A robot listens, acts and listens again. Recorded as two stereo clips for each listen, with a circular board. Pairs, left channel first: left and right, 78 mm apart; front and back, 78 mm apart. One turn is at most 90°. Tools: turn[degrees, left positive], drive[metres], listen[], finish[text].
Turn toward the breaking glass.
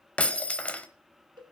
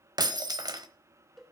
Thought: The breaking glass: 160° left.
Action: turn[90]
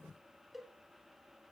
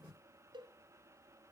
Thought: Nothing new. It was at 70° left.
Action: turn[70]
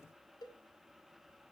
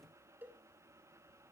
Action: finish[Facing where the breaking glass came from. I can't hear it now.]